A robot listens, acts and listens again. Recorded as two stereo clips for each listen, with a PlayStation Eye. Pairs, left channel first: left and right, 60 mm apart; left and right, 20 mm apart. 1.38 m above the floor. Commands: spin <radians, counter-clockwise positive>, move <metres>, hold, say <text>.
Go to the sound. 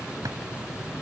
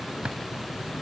spin -1.31
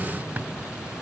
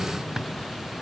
hold
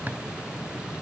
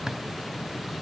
hold
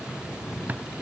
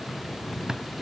say I heard a drawer, but can't make it out now. It was about straight ahead or 30° right. I did not reach it.